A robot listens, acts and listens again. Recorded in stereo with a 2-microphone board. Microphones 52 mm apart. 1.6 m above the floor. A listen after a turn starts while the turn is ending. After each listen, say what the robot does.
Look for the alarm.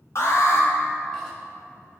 Turn 60° left.
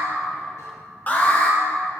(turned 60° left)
Turn 40° left.
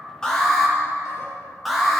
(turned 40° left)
Facing the alarm, 1 to 2 m away.